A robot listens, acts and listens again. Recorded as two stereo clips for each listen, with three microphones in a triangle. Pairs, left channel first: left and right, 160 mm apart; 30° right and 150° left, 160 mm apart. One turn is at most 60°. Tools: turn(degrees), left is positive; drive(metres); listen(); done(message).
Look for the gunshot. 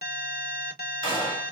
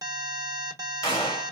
turn(degrees=35)
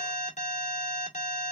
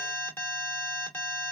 done("I heard a gunshot from this way, but can't make it out now.")